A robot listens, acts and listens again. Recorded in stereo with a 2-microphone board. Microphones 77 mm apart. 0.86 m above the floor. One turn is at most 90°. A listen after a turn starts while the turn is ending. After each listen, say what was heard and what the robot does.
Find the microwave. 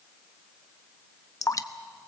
Keep listening.
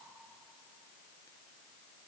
Keep listening.
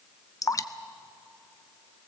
I can't make out a microwave to turn to.